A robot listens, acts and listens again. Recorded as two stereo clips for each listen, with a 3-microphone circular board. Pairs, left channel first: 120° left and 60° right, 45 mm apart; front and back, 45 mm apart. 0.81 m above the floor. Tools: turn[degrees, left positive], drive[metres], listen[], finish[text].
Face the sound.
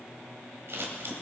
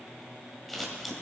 Thought: The scissors: 90° right.
Action: turn[-90]
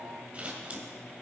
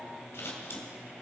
Action: finish[Found it: scissors, straight ahead, 2 to 4 m away.]